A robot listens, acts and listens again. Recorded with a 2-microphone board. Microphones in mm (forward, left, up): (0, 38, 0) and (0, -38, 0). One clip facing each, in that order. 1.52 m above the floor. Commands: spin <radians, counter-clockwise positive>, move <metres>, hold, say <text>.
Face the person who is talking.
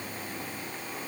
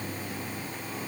hold
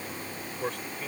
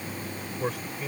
spin -0.52
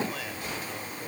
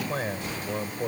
spin -2.53
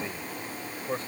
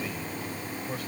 spin 0.52
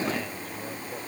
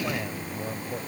hold
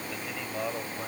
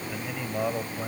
spin -0.26
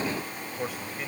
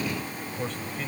say Found it: a man speaking, straight ahead.